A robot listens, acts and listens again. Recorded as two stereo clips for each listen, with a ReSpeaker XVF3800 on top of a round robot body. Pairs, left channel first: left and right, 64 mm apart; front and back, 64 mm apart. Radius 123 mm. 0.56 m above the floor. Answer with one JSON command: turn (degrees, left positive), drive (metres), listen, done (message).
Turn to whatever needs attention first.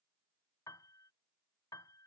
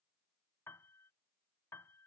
{"listen": true}
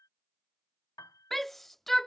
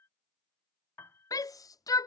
{"done": "Facing the shout."}